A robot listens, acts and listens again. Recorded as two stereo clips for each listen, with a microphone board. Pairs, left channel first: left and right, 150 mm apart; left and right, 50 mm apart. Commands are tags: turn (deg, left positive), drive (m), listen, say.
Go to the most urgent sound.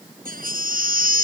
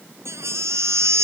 <turn deg="-90"/>
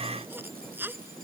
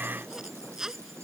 <turn deg="-15"/>
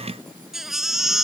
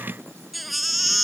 <drive m="1.0"/>
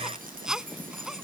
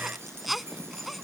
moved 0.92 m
<drive m="1.0"/>
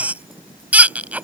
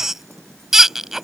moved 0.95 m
<turn deg="-10"/>
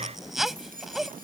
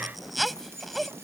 <drive m="1.0"/>
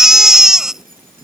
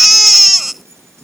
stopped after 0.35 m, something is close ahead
<say>Arrived at the baby crying, straight ahead.</say>